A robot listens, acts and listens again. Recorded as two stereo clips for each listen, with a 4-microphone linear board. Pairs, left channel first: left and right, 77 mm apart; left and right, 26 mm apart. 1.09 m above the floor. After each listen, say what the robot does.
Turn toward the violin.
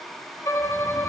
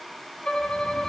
Turn 40° left.
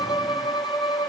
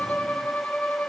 Turn 105° left.
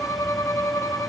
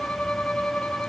Turn 40° left.
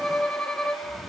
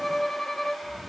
Turn 10° left.
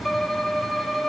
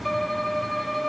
Facing the violin.